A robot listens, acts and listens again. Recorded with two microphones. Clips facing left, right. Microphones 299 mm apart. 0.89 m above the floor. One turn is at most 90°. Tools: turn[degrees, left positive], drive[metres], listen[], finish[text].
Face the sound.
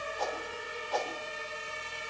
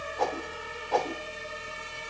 Thought: The whoosh: about 65° right or 115° right.
Action: turn[-65]
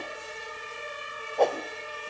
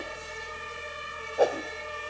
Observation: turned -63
Action: finish[Facing the whoosh.]